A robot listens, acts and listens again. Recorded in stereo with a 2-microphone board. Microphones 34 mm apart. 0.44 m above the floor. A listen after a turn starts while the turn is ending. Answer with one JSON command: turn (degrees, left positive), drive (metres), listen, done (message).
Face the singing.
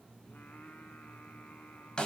{"turn": 90}
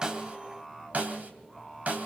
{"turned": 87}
{"done": "Facing the singing, 2 to 4 m away."}